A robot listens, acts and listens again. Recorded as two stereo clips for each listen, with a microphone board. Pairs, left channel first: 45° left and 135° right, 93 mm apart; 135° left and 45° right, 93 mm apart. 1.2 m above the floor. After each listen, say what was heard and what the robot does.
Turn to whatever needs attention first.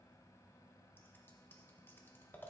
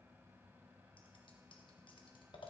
Keep listening.
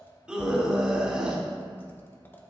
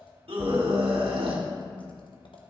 The scream: 55° right. Turn 55° right.
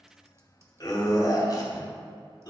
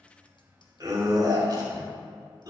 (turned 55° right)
Found it: a scream, straight ahead, 2 to 4 m away.